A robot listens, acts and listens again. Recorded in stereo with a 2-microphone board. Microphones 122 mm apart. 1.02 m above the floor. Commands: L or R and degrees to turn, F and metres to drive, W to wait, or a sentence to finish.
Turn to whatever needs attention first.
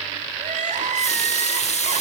R90
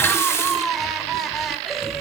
Found it: crying, straight ahead, 2 to 4 m away.